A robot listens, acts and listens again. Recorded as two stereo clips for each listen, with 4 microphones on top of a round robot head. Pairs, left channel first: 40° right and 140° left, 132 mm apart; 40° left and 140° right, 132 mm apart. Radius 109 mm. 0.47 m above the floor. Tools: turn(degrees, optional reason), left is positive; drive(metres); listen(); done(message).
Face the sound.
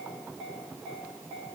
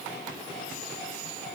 listen()
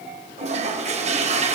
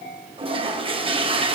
turn(degrees=175, reason="The toilet flushing: 175° left.")
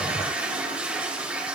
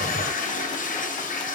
turn(degrees=55, reason="The toilet flushing is now 55° left.")
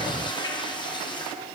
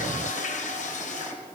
turn(degrees=15, reason="The toilet flushing is now 15° left.")
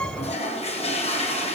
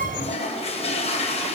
done("Facing the toilet flushing.")